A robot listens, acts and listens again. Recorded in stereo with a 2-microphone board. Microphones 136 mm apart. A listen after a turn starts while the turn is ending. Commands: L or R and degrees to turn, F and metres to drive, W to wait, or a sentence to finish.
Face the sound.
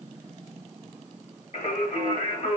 L65
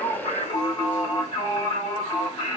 L40
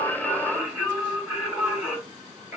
R15
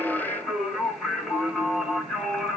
Found it: singing, straight ahead.